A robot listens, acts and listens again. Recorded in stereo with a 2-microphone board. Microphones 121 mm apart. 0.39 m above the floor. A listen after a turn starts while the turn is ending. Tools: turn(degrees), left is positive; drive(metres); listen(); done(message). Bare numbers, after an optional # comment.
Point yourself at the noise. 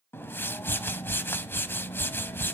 # The whoosh: about 20° left or 160° left.
turn(20)
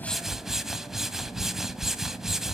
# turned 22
done("Found it: a whoosh, straight ahead.")